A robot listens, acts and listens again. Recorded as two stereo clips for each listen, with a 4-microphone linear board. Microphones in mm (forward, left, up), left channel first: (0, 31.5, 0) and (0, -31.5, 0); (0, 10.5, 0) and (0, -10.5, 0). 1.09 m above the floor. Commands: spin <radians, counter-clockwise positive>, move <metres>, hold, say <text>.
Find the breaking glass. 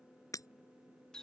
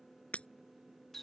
spin 1.13
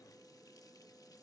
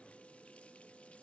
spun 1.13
hold
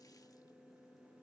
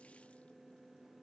say I heard breaking glass, but can't make it out now. It was about straight ahead or 50° left.